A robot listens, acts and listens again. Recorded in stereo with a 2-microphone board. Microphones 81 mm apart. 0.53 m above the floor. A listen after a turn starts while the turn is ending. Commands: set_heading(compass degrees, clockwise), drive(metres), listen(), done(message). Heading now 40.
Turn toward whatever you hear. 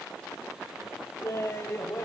set_heading(5)
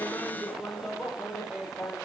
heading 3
done("Facing the laughter.")